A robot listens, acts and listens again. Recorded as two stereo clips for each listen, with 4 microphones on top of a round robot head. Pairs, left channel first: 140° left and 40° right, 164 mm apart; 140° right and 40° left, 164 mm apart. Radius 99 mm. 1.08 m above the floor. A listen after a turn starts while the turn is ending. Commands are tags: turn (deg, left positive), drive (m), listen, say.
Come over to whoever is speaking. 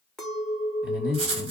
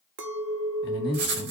<turn deg="-120"/>
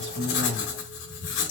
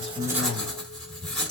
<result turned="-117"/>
<listen/>
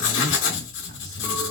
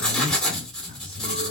<listen/>
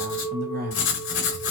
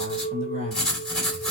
<drive m="1.0"/>
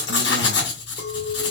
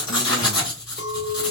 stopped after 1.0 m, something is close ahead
<listen/>
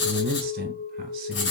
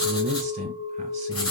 <say>I am next to the man speaking.</say>